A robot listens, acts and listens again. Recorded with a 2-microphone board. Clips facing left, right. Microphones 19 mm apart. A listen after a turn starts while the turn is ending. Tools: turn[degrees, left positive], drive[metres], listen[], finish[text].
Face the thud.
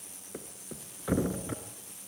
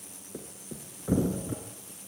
Thought: The thud: about 50° left or 130° left.
Action: turn[50]
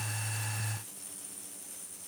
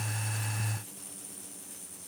Action: listen[]
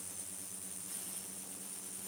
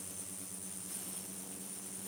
Action: finish[I heard a thud, but can't make it out now. It was about straight ahead or 80° left.]